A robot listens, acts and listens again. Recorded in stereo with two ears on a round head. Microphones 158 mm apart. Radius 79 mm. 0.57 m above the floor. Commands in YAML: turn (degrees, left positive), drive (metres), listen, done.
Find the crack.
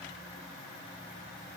listen: true
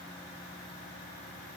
listen: true
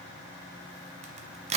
turn: -40
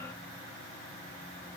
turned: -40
listen: true
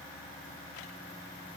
done: "I heard a crack, but can't make it out now. It was about straight ahead or 100° right."